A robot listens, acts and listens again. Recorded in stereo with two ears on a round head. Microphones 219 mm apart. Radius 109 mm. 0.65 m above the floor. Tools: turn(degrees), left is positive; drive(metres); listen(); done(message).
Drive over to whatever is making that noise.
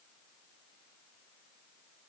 listen()
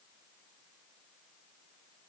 listen()
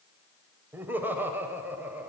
turn(degrees=-30)
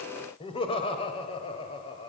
turn(degrees=25)
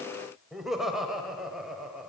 drive(metres=1.0)
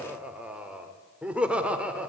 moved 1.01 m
drive(metres=1.0)
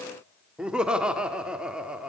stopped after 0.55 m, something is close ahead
done("I am next to the laughter.")